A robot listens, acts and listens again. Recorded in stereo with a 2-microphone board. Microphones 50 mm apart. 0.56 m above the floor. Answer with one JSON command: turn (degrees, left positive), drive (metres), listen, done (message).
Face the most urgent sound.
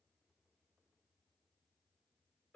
{"listen": true}
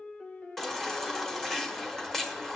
{"turn": 30}
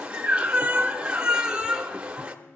{"turn": -20}
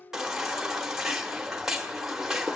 {"turn": -10}
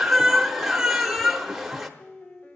{"done": "Found it: a baby crying, straight ahead."}